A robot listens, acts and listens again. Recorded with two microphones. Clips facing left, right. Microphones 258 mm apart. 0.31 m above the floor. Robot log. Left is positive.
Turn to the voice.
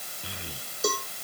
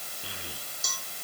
cmd yaw +30
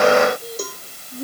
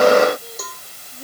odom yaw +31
note: So it is at 150° left.
cmd yaw +150
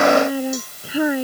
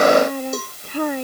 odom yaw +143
end: Facing the child speaking.